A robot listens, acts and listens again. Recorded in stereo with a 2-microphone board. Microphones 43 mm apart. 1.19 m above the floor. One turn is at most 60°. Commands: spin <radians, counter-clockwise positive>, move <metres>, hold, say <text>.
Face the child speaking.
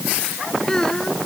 spin 0.26
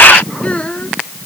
spin 1.05
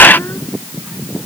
spin 1.05
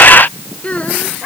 spin 0.52
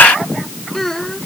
spin 0.17
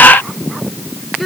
say Found it: a child speaking, straight ahead.